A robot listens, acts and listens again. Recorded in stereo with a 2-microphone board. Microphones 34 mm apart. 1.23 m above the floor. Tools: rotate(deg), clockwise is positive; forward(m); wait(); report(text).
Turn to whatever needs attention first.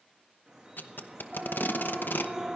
rotate(20)
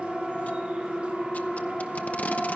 report("Found it: a siren, straight ahead, 2 to 4 m away.")